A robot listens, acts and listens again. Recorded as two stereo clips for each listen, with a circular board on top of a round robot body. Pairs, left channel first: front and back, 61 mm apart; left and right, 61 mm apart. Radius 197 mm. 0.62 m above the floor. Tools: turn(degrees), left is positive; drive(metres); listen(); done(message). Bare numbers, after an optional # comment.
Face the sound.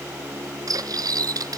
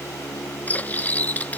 # The cutlery clinking: 155° left.
turn(155)
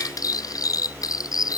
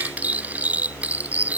# The cutlery clinking is now 25° right.
turn(-25)
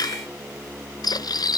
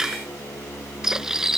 done("Facing the cutlery clinking.")